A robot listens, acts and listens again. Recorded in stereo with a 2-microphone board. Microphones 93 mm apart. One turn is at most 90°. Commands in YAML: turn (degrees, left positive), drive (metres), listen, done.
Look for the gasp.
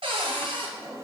listen: true
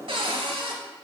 listen: true
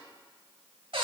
done: "I can't make out a gasp, only a drawer and a cupboard door."